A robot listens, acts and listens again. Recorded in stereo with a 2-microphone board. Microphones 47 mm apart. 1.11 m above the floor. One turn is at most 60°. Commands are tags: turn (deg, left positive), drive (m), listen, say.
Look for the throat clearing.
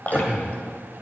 <turn deg="-25"/>
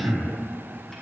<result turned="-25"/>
<turn deg="-60"/>
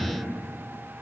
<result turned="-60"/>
<turn deg="-60"/>
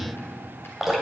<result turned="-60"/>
<turn deg="-10"/>
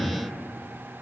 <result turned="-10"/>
<say>Facing the throat clearing, 1 to 2 m away.</say>